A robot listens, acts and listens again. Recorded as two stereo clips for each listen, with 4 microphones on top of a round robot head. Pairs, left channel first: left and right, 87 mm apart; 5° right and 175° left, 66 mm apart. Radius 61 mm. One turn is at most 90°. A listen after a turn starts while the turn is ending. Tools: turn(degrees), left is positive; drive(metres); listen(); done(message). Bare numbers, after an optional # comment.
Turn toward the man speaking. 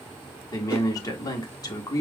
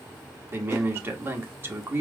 # The man speaking: 130° left.
turn(90)
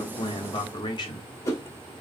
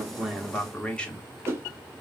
# The man speaking is now 70° left.
turn(70)
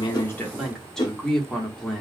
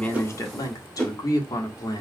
done("Found it: a man speaking, straight ahead.")